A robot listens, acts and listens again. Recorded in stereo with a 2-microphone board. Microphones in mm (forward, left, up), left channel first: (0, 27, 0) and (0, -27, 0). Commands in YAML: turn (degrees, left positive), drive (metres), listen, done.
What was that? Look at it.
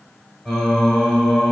turn: 30
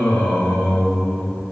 turn: 145
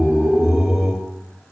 turn: -10
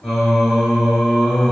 done: "Found it: singing, straight ahead, under 1 m away."